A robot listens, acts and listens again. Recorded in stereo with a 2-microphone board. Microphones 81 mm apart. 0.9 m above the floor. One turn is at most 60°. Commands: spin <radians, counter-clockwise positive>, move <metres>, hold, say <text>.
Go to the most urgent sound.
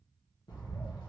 hold
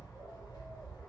hold
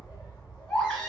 spin 0.26
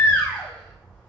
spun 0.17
spin 0.44
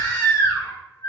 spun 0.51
spin 1.05
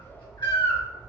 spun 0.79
spin 1.05
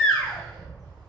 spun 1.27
spin 0.17
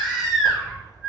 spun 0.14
move 1.0
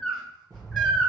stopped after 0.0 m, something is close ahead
say Blocked. The baby crying is further on, straight ahead.